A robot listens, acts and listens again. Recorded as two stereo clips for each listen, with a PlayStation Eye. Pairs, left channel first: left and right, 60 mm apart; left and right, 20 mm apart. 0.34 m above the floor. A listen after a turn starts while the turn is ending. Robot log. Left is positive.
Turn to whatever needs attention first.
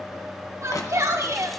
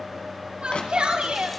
note: The shout: about 60° right or 120° right.
cmd yaw -60
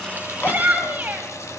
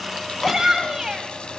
note: So it is at 40° right.
cmd yaw -40
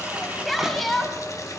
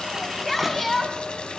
end: Facing the shout, 1 to 2 m away.